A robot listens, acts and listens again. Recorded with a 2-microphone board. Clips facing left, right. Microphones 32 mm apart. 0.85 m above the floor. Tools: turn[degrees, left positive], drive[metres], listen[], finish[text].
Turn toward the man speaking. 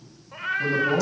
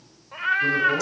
Thought: The man speaking: about 55° left or 125° left.
Action: turn[55]
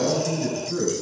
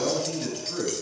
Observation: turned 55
Action: finish[Found it: a man speaking, straight ahead.]